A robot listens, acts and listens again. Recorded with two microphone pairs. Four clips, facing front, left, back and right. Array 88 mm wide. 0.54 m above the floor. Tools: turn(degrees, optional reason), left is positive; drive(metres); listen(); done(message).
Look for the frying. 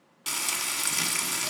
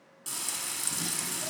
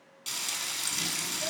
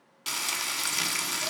turn(degrees=-55, reason="The frying: 55° right.")
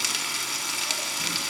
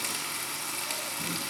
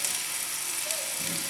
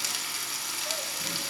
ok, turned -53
done("Found it: frying, straight ahead, under 1 m away.")